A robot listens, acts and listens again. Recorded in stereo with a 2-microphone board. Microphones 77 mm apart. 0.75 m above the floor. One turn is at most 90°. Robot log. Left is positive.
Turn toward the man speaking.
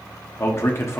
note: The man speaking: about 35° left or 145° left.
cmd yaw +35
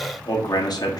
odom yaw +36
note: So it is at 105° left.
cmd yaw +90
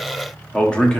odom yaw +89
note: The man speaking is now 15° left.
cmd yaw +15
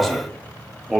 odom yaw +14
end: Facing the man speaking.